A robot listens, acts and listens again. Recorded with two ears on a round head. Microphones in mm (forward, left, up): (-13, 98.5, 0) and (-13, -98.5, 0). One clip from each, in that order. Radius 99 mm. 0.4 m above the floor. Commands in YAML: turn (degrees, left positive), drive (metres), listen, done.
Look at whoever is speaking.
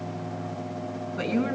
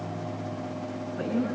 turn: 70
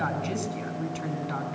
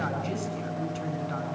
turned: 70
turn: 10
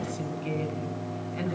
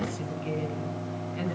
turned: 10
done: "Facing the woman speaking, over 4 m away."